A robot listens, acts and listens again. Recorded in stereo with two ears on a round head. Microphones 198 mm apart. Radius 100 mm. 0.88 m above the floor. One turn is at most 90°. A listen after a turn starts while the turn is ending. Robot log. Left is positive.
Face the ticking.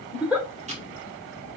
note: The ticking: about 30° right or 150° right.
cmd yaw -30
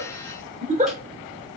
cmd idle
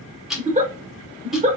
end: Found it: ticking, straight ahead.